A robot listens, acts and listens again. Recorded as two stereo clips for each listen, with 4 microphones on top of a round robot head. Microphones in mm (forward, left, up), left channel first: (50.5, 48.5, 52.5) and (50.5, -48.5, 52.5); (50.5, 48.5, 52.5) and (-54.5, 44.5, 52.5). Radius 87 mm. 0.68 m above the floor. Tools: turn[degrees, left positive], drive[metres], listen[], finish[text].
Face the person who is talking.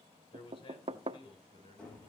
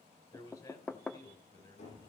Thought: The man speaking: 55° left.
Action: turn[55]
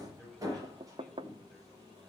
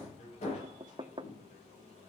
Thought: The man speaking is now 10° left.
Action: turn[10]
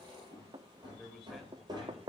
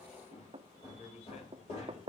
Action: finish[Found it: a man speaking, straight ahead, over 4 m away.]